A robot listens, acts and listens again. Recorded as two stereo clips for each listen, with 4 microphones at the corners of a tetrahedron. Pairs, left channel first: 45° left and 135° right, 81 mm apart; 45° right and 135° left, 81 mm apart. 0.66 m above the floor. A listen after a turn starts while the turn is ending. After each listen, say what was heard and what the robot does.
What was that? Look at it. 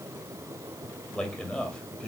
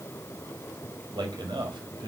The man speaking: 120° left. Turn 120° left.
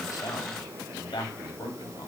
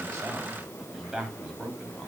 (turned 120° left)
The man speaking is now 50° left. Turn 50° left.
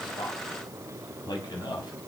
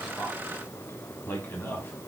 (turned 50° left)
The man speaking is now 15° left. Turn 15° left.
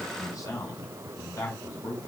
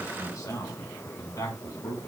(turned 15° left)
Found it: a man speaking, straight ahead, over 4 m away.